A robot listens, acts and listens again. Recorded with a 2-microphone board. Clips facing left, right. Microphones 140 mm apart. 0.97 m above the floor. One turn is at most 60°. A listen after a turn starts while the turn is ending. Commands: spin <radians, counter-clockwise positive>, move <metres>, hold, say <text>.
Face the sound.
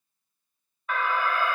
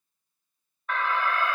spin 0.52
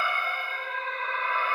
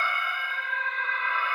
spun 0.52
spin 1.05
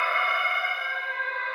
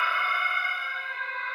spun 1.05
spin 1.05
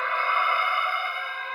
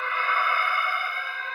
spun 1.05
spin 0.44
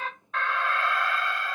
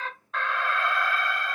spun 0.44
say Found it: an alarm, straight ahead, under 1 m away.